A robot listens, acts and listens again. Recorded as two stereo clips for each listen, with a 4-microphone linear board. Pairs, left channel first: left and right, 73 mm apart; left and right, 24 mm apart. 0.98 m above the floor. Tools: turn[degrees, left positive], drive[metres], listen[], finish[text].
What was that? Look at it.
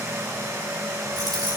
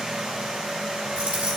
Action: turn[-90]
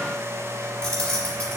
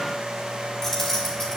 Thought: So it is at 15° left.
Action: turn[15]
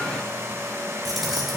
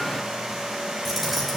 Action: listen[]
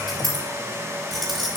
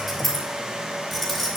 Action: finish[Found it: keys jangling, straight ahead.]